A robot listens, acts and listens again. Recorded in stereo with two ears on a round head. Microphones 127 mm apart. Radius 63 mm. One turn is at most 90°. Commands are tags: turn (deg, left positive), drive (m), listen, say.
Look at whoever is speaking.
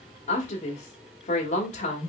<turn deg="50"/>
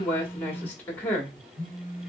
<turn deg="15"/>
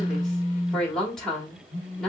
<say>Facing the woman speaking, 1 to 2 m away.</say>